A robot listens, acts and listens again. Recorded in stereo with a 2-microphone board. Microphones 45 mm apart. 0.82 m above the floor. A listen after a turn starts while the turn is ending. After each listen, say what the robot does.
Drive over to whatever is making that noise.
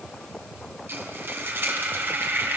Turn 50° right.
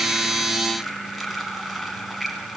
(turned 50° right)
Drive 1.0 m forward.
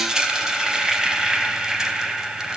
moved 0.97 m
Turn 15° right.
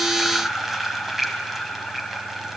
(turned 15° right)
Drive 1.0 m forward.
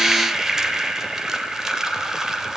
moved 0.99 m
Turn 10° right.
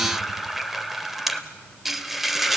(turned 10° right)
Drive 1.0 m forward.
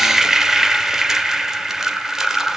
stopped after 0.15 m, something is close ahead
Turn 10° right.
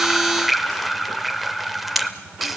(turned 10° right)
Arrived at the frying, straight ahead.